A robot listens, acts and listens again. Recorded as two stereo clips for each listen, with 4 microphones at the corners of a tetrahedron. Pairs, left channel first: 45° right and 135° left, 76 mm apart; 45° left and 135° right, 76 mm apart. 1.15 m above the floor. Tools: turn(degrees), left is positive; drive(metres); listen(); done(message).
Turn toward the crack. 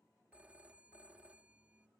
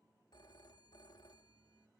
listen()
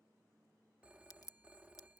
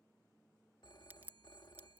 turn(degrees=-75)
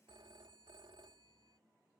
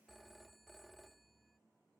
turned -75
done("Facing where the crack came from. I can't hear it now.")